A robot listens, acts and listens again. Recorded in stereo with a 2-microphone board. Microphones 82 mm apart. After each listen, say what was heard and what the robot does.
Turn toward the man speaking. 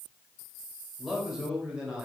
Turn 30° right.
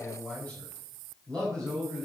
So it is at 10° left. Turn 10° left.
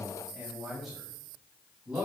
The man speaking is now 10° right. Turn 10° right.
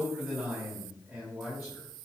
Found it: a man speaking, straight ahead, over 4 m away.